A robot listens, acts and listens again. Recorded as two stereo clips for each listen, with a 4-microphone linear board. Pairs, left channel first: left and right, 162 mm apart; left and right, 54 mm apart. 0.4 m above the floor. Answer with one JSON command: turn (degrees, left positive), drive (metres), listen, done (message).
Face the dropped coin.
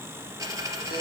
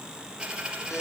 {"turn": -20}
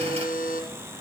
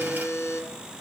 {"listen": true}
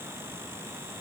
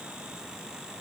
{"done": "I heard a dropped coin, but can't make it out now. It was about straight ahead or 140° right."}